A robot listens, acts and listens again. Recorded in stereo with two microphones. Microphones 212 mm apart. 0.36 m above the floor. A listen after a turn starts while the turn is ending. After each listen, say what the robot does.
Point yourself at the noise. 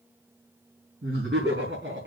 Turn 60° right.
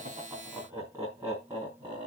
Turn 25° right.
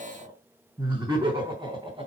Turn 20° right.
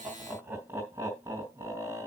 Turn 10° right.
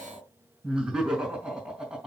Found it: laughter, straight ahead, 2 to 4 m away.